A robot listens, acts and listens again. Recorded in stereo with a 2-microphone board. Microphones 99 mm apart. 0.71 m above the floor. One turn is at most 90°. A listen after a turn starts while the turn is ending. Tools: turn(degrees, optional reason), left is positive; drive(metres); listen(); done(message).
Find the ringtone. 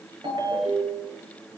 turn(degrees=-60, reason="The ringtone: about 60° right or 120° right.")
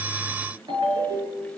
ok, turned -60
turn(degrees=-60, reason="So it is at 60° right.")
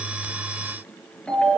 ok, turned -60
turn(degrees=10, reason="The ringtone is now 10° left.")
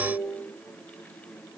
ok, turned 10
done("Facing the ringtone.")